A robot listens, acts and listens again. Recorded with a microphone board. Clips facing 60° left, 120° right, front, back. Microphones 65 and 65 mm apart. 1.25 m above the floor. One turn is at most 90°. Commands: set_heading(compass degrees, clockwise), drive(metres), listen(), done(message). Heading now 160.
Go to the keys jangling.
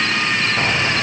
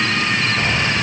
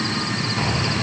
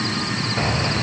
set_heading(70)
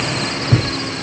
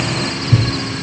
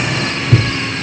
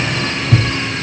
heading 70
set_heading(345)
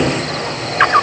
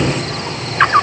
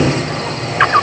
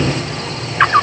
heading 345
set_heading(315)
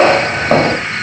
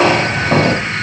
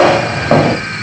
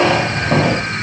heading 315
set_heading(305)
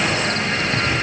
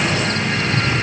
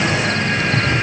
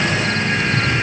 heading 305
drive(1.0)
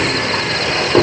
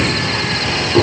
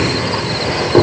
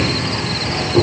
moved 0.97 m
drive(1.0)
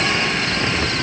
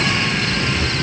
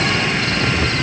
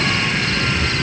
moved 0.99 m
drive(1.0)
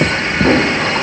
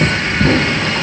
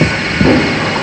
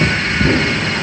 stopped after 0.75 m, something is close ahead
done("I am next to the keys jangling.")